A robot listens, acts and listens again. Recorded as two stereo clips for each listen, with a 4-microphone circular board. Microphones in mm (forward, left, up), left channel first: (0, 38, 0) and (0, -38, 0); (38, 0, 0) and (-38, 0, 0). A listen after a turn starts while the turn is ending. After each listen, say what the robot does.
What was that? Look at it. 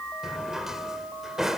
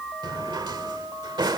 Turn 175° right.
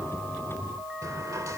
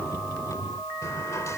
Turn 45° right.
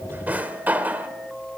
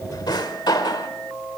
Turn 20° right.
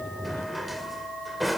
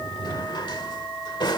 Facing the drawer, 1 to 2 m away.